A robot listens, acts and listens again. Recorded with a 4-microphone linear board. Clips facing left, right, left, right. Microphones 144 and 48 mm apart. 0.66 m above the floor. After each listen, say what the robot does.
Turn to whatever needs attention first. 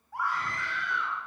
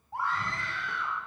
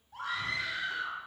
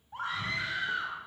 Turn 25° right.
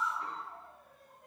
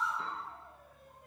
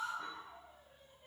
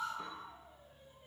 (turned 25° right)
Found it: a scream, straight ahead.